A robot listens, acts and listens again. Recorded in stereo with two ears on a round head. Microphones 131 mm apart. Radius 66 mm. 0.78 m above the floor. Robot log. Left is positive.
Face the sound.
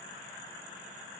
cmd idle
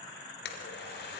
note: The blender: about 75° left or 105° left.
cmd yaw +75
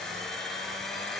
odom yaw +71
end: Found it: a blender, straight ahead.